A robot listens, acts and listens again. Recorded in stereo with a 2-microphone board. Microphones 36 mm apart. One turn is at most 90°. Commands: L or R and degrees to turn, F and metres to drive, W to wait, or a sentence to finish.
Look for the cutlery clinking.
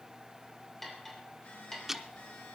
L30
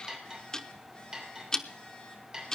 R20
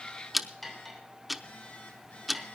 Found it: cutlery clinking, straight ahead, 2 to 4 m away.